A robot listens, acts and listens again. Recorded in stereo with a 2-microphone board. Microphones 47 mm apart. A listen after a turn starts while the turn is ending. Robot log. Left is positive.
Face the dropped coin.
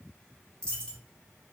note: The dropped coin: about 20° left or 160° left.
cmd yaw +20
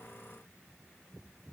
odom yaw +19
cmd idle
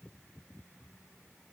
end: I heard a dropped coin, but can't make it out now. It was about 5° left or 140° left.